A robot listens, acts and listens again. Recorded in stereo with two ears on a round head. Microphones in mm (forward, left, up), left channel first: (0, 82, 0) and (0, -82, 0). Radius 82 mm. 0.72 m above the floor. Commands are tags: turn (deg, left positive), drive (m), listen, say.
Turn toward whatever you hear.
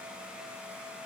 <listen/>
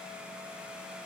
<listen/>
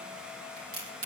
<turn deg="-50"/>
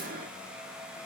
<listen/>
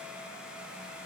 <say>I heard a crack, but can't make it out now. It was about straight ahead or 80° right.</say>